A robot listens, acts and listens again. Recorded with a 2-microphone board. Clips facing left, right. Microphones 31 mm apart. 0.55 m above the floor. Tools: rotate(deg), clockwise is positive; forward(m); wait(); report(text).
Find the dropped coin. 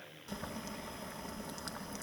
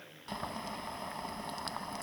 wait()
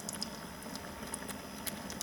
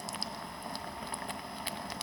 wait()
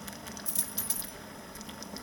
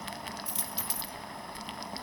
rotate(25)
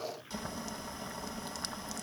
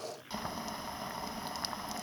wait()
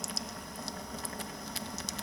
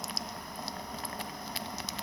report("I heard a dropped coin, but can't make it out now. It was about straight ahead or 130° right.")